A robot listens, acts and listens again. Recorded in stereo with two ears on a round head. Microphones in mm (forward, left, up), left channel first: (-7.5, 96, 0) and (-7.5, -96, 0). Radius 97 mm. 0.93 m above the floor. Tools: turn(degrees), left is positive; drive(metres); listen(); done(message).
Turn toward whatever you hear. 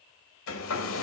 turn(degrees=70)
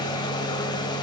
turn(degrees=20)
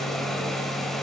done("Found it: a hair dryer, straight ahead, 1 to 2 m away.")